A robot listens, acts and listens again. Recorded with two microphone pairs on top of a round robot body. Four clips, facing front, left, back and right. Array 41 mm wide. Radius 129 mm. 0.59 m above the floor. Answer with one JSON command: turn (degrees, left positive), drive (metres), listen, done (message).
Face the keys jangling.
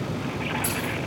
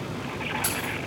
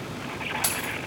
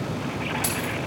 {"turn": -160}
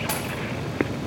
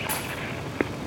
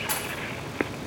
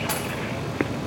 {"turn": -35}
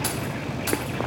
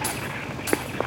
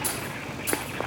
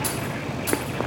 {"turn": 20}
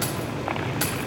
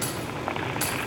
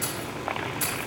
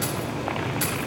{"turn": 10}
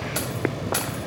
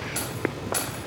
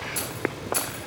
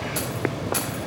{"turn": 10}
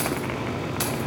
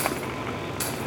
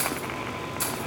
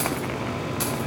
{"done": "Facing the keys jangling, 2 to 4 m away."}